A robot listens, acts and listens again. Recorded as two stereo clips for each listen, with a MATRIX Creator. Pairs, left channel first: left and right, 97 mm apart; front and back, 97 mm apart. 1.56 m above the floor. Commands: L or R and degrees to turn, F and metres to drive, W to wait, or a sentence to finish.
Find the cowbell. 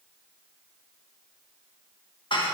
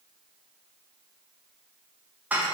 W
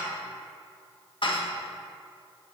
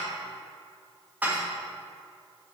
W
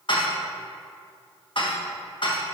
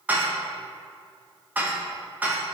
I can't make out a cowbell to turn to.